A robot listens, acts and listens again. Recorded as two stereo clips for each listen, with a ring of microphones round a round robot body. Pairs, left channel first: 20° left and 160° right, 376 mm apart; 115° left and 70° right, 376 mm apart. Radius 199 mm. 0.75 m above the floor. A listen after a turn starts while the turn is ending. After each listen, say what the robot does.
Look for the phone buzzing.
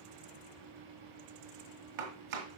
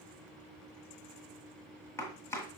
Keep listening.
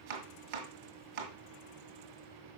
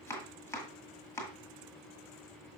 Keep listening.
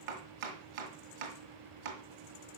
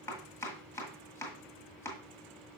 I can't make out a phone buzzing, only chopping.